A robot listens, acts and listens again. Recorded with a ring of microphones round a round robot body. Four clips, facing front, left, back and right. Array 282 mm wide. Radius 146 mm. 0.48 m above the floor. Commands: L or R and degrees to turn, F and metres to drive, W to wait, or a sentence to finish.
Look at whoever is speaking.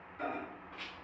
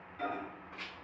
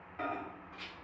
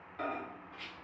W
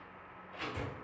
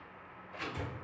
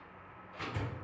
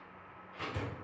W
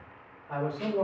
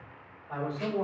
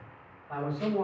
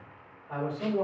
R20
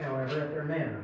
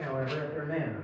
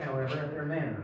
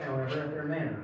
Found it: a man speaking, straight ahead.